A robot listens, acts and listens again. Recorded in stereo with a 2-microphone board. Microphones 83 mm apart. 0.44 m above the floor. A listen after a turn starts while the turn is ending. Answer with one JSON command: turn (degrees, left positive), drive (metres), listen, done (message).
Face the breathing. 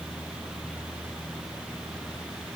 {"listen": true}
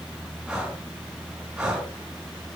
{"turn": -30}
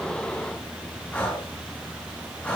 {"turn": 20}
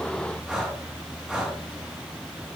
{"done": "Found it: breathing, straight ahead, over 4 m away."}